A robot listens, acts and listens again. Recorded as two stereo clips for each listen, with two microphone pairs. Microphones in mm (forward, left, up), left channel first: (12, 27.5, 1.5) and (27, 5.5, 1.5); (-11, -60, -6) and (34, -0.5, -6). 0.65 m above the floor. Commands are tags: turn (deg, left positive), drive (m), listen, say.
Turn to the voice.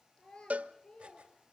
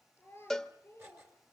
<turn deg="175"/>
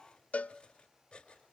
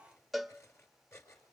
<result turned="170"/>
<listen/>
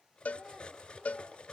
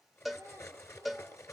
<listen/>
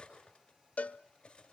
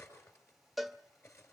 <say>Facing where the child speaking came from. I can't hear it now.</say>